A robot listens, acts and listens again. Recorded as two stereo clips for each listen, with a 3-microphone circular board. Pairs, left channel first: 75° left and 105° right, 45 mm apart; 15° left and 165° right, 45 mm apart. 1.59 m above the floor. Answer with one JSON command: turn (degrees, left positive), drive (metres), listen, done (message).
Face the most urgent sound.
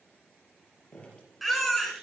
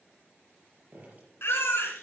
{"turn": -15}
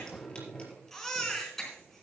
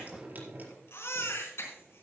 {"turn": -10}
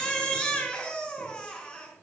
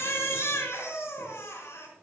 {"done": "Facing the baby crying."}